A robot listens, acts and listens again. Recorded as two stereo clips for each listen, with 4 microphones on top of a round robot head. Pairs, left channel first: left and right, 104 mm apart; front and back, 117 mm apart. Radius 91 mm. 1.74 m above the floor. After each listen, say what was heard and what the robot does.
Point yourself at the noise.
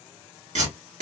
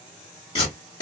The tape being pulled: 65° right. Turn 65° right.
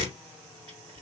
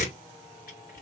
The tape being pulled is now 30° right. Turn 30° right.
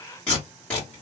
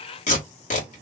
Facing the tape being pulled, 1 to 2 m away.